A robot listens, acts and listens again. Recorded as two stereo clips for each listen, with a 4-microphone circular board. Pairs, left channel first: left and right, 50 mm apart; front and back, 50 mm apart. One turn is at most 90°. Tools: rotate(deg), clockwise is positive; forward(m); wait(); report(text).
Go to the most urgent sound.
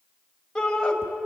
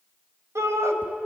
rotate(-90)
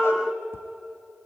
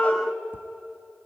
rotate(-65)
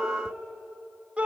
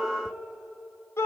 rotate(20)
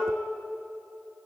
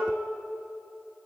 wait()
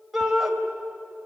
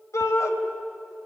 forward(1.0)
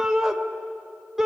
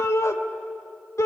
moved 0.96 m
rotate(10)
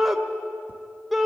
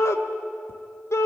forward(1.0)
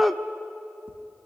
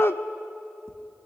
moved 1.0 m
forward(1.0)
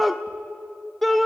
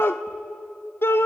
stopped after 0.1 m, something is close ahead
report("I am next to the shout.")